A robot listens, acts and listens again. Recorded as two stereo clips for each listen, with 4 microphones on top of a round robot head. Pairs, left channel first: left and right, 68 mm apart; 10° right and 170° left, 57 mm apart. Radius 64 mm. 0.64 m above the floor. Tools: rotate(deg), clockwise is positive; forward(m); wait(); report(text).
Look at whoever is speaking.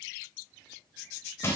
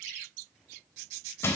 wait()
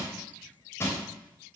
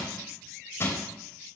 wait()
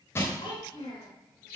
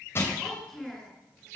rotate(-75)
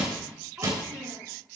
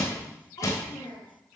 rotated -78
rotate(20)
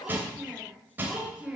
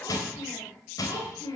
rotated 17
report("Found it: a child speaking, straight ahead.")